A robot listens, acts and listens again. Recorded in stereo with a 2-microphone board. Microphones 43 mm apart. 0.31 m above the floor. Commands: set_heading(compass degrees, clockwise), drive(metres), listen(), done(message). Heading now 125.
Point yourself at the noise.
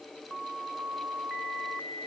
listen()
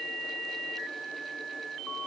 listen()
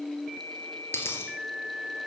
set_heading(55)
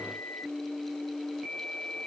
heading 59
listen()
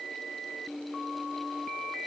done("I heard a dropped coin, but can't make it out now. It was about straight ahead or 45° left.")